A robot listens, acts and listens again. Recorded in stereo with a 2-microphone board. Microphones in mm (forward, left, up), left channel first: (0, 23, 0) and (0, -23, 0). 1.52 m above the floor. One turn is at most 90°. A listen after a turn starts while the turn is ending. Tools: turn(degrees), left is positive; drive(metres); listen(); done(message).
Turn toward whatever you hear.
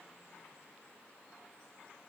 listen()
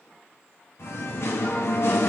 turn(degrees=65)
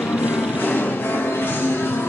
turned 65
turn(degrees=60)
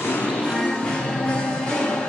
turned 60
turn(degrees=25)
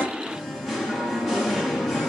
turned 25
done("Facing the singing.")